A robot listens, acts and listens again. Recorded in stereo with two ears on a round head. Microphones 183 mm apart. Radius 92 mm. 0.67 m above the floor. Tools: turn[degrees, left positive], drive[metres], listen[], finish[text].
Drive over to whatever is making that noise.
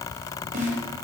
Thought: The snare drum: about 40° right or 140° right.
Action: turn[-40]
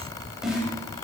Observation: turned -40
Action: drive[1.0]
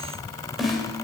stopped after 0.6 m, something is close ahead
Action: finish[Something is in my way. I am facing the snare drum but have not reached it.]